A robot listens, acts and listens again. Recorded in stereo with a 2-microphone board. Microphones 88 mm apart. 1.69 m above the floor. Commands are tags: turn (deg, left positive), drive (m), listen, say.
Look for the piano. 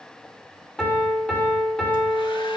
<turn deg="30"/>
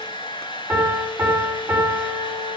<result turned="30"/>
<turn deg="-20"/>
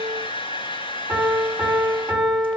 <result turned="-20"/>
<turn deg="-10"/>
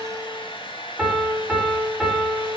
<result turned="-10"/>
<say>Facing the piano.</say>